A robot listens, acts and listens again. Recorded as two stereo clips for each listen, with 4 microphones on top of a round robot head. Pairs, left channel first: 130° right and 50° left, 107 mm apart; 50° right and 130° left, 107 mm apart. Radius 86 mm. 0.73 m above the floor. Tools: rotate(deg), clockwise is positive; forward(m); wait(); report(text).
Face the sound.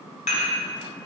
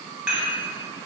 rotate(150)
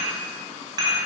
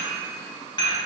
report("Facing the dishes clattering.")